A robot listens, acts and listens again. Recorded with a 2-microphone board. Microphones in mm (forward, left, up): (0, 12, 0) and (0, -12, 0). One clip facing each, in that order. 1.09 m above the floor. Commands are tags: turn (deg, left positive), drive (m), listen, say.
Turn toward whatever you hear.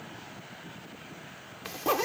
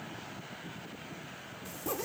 <turn deg="65"/>
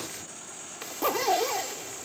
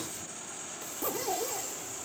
<turn deg="50"/>
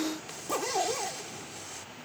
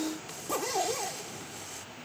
<say>Facing the zipper.</say>